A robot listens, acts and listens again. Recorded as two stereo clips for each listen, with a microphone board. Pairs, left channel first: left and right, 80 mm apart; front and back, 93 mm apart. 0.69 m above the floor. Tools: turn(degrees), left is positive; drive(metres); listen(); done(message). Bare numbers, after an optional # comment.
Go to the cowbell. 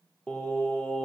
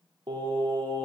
listen()
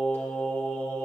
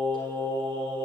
listen()
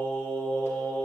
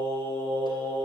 done("I can't make out a cowbell, only singing.")